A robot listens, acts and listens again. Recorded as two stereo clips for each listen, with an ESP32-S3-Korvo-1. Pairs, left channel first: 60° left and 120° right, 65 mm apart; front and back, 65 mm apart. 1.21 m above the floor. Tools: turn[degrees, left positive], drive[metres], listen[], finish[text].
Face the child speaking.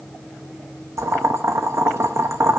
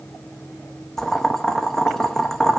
Action: listen[]
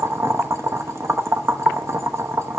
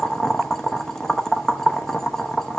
Action: listen[]
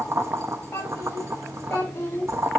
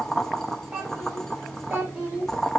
Thought: The child speaking: 120° left.
Action: turn[120]
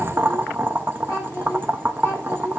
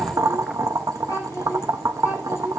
Thought: The child speaking is now 25° left.
Action: turn[25]
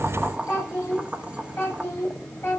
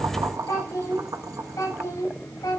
Thought: The child speaking is now 10° left.
Action: turn[10]
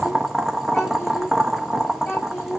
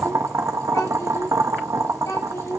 Action: finish[Facing the child speaking, over 4 m away.]